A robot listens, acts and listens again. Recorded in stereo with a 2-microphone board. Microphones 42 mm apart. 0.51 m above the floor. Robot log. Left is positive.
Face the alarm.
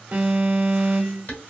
note: The alarm: about 30° right or 150° right.
cmd yaw -30
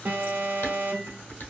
note: So it is at 110° right.
cmd yaw -110
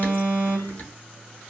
note: The alarm is now 60° right.
cmd yaw -60
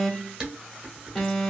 note: The alarm is now 10° left.
cmd yaw +10
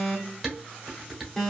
end: Found it: an alarm, straight ahead.